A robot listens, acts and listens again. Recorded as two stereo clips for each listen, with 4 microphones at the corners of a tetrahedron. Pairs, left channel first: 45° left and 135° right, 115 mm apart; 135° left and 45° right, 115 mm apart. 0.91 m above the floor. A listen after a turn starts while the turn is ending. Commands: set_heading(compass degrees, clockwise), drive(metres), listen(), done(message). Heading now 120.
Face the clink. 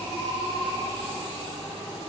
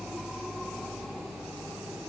listen()
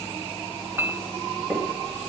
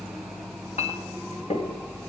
set_heading(325)
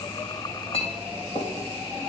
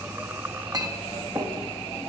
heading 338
set_heading(328)
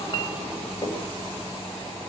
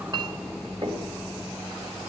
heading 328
done("Facing the clink.")